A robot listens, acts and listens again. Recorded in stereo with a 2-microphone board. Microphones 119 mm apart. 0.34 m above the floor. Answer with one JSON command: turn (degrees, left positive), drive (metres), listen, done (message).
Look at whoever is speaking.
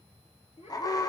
{"turn": 90}
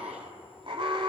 {"listen": true}
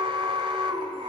{"listen": true}
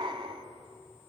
{"done": "I heard a child speaking from this way, but can't make it out now."}